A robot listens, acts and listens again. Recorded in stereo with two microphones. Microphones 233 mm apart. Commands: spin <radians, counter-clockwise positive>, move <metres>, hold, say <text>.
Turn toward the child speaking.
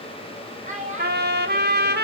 spin -0.52
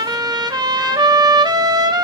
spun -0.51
hold
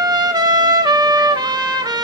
hold
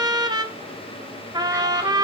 say I heard a child speaking, but can't make it out now. It was about 5° right or 120° right.